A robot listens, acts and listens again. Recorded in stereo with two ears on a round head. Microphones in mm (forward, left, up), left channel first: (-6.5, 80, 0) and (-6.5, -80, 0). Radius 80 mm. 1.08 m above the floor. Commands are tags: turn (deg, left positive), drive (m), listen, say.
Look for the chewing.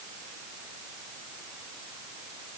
<listen/>
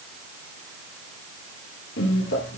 <turn deg="70"/>
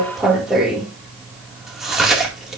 <say>Facing the chewing, 1 to 2 m away.</say>